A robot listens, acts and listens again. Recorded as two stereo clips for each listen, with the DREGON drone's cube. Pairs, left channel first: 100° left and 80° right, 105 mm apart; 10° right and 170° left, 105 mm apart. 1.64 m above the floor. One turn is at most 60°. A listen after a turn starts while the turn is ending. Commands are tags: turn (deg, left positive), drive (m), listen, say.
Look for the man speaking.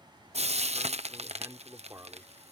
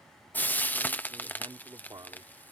<turn deg="-60"/>
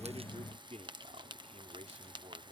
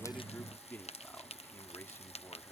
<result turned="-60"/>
<turn deg="-60"/>
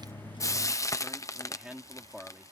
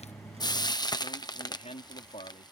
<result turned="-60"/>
<say>Facing the man speaking.</say>